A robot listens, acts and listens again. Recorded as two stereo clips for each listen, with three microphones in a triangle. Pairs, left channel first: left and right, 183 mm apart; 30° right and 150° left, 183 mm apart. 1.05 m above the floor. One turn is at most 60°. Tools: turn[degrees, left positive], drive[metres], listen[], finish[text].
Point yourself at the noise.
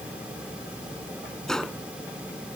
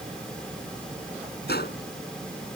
Action: finish[Facing the gunshot.]